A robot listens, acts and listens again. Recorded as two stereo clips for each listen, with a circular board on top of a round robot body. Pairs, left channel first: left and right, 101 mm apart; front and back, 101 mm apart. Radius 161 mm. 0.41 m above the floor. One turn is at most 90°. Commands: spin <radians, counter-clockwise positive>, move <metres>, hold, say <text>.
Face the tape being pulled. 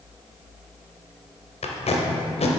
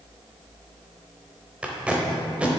spin 1.57
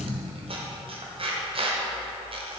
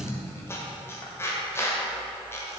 spin 0.17
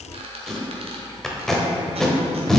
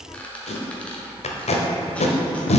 say Found it: tape being pulled, straight ahead, under 1 m away.